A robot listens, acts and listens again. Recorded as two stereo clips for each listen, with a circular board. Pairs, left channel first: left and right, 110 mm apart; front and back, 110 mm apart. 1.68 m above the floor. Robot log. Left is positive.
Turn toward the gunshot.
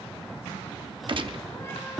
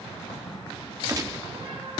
note: The gunshot: 125° right.
cmd yaw -125
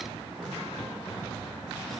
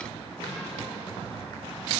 end: I heard a gunshot from this way, but can't make it out now.